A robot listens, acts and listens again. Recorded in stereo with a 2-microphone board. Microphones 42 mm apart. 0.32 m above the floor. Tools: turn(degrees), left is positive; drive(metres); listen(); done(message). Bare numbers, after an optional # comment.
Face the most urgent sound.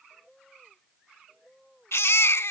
turn(90)
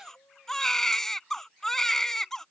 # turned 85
# So it is at 10° left.
turn(10)
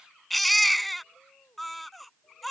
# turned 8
done("Facing the baby crying.")